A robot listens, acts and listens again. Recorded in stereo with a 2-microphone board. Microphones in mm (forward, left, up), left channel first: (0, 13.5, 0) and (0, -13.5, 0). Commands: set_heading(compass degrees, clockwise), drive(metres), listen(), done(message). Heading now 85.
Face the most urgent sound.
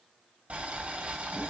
listen()
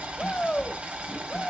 set_heading(40)
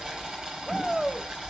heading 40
done("Facing the shout, 1 to 2 m away.")